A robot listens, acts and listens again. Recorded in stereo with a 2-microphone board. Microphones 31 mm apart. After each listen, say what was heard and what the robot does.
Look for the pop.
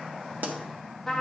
Turn 90° right.
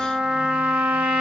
Facing where the pop came from. I can't hear it now.